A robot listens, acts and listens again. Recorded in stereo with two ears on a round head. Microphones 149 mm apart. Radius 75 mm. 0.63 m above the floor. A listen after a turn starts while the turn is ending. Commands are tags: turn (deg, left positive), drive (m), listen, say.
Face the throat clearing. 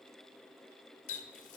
<listen/>
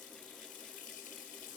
<listen/>
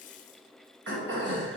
<turn deg="-90"/>
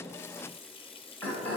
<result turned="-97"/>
<turn deg="10"/>
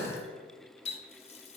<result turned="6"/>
<say>Facing the throat clearing, 2 to 4 m away.</say>